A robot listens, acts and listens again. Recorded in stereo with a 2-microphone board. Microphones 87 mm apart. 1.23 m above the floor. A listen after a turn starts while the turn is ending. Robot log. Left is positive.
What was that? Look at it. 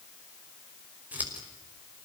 note: The scissors: about 20° right or 160° right.
cmd yaw -20
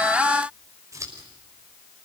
note: So it is at 140° right.
cmd yaw -140
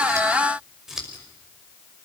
end: Found it: scissors, straight ahead, over 4 m away.